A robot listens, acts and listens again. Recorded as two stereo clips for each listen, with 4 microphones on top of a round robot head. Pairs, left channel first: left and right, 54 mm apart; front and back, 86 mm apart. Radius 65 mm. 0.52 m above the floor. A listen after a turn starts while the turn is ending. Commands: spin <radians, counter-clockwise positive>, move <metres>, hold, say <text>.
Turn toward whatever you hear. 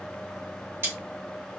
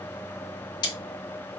spin -0.70
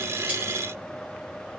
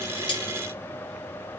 hold
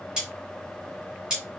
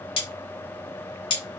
spin -0.17
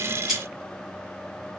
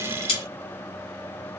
say Found it: cutlery clinking, straight ahead.